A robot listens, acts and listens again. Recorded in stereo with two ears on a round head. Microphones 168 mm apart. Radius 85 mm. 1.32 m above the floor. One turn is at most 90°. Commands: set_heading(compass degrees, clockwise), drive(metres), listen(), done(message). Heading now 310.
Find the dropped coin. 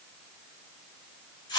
listen()
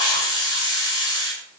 listen()
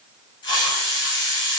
done("I can't make out a dropped coin to turn to.")